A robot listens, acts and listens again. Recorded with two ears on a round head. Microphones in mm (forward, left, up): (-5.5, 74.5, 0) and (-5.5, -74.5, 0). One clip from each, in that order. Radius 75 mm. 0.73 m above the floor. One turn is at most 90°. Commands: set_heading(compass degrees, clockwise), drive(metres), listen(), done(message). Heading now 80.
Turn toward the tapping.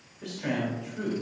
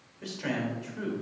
listen()
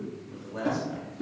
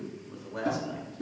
set_heading(50)
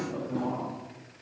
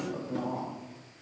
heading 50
listen()
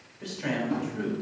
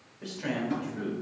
set_heading(80)
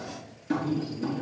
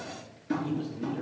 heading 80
done("Facing the tapping, 2 to 4 m away.")